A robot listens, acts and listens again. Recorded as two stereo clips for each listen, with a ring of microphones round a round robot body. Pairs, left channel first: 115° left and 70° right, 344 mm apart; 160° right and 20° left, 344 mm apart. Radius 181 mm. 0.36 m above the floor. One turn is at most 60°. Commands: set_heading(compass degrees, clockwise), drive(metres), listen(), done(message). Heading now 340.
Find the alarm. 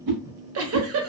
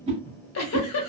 listen()
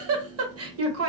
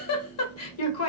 listen()
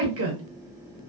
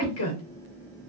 done("I can't make out an alarm, only a whoosh and a giggle.")